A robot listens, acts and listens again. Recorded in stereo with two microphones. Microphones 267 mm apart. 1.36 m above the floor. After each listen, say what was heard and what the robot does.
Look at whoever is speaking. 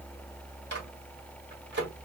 Keep listening.
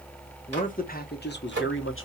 The man speaking: about 45° left or 135° left. Turn 45° left.
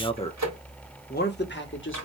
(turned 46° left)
So it is at 45° left. Turn 45° left.
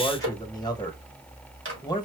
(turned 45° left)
The man speaking is now 15° left. Turn 15° left.
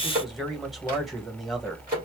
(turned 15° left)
Found it: a man speaking, straight ahead.